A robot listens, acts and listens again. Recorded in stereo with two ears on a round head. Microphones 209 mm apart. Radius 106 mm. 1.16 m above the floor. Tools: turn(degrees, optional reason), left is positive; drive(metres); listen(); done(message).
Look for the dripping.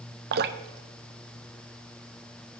turn(degrees=-45, reason="The dripping: about 45° right or 135° right.")
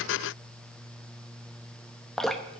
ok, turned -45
done("Facing the dripping.")